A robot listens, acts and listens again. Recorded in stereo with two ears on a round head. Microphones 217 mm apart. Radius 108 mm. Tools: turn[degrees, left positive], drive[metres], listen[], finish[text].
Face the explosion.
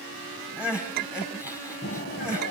Thought: The explosion: about 45° left or 135° left.
Action: turn[45]
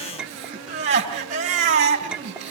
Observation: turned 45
Action: listen[]
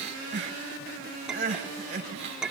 Action: finish[I heard an explosion, but can't make it out now. It was about straight ahead or 90° left.]